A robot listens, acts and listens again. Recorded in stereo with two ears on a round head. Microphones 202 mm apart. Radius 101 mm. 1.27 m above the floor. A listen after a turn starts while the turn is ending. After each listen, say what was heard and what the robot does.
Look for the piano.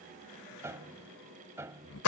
Turn 30° right.
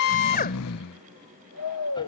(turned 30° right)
Keep listening.
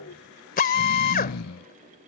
Keep listening.
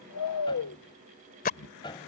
So it is at 20° left. Turn 20° left.
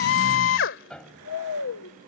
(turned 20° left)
Found it: a piano, straight ahead.